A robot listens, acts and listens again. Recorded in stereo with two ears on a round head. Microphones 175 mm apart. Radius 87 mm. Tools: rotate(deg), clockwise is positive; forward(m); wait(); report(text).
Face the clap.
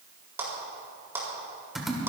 rotate(30)
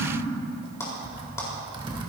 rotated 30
wait()
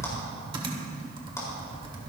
wait()
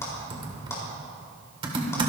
report("I heard a clap, but can't make it out now. It was about 15° left or 135° right.")